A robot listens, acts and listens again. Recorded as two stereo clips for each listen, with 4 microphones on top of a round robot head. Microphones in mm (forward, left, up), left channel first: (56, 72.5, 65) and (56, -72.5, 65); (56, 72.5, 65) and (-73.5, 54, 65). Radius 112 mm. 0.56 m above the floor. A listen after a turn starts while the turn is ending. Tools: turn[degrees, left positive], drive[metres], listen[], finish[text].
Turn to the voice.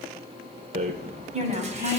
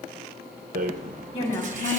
Thought: The woman speaking: 45° right.
Action: turn[-45]
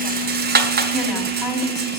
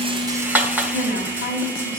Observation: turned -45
Action: listen[]
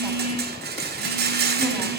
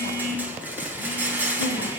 Action: listen[]
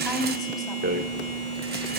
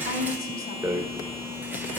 Action: finish[Facing where the woman speaking came from. I can't hear it now.]